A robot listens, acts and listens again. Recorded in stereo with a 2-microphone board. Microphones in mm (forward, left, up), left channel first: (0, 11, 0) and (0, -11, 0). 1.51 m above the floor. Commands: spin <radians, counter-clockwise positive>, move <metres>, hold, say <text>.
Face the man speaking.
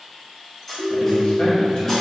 spin 0.87
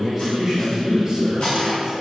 spin -0.44
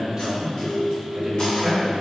spin -0.79
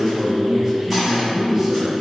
spin -0.17
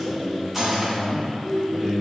say Facing the man speaking, 1 to 2 m away.